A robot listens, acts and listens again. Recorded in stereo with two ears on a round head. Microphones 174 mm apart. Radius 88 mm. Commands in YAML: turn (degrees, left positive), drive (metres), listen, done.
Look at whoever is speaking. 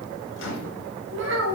turn: -60
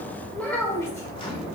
turn: 15
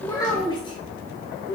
turn: 35
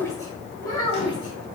turn: 25
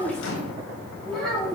done: "Found it: a child speaking, straight ahead."